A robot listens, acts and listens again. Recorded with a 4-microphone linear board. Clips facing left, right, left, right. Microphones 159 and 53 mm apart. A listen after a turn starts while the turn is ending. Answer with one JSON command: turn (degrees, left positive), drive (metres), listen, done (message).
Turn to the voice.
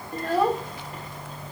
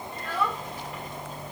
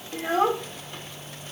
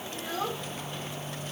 {"turn": 40}
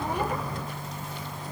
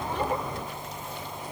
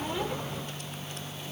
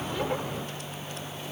{"listen": true}
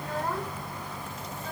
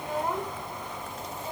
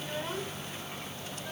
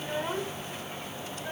{"turn": -15}
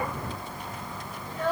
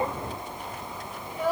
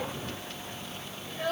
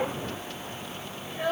{"turn": -10}
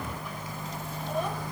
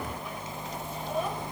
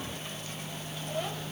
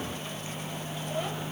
{"listen": true}
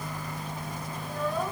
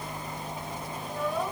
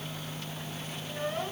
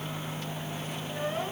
{"done": "Found it: a child speaking, straight ahead."}